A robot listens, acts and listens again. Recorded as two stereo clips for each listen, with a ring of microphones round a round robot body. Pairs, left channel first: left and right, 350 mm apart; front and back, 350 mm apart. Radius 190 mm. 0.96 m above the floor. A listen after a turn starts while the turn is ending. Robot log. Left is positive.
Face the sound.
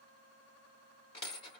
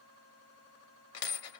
note: The dropped coin: 15° left.
cmd yaw +15
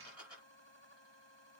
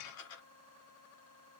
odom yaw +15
end: Facing the dropped coin.